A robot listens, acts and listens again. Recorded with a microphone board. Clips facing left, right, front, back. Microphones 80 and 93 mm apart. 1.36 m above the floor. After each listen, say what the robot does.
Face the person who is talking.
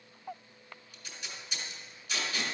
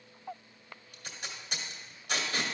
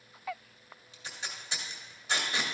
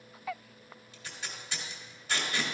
Keep listening.
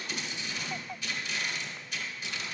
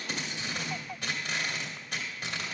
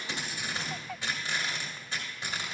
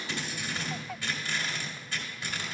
Keep listening.
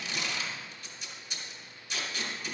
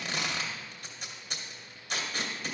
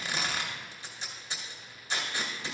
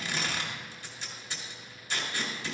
I can't make out anyone speaking to turn to.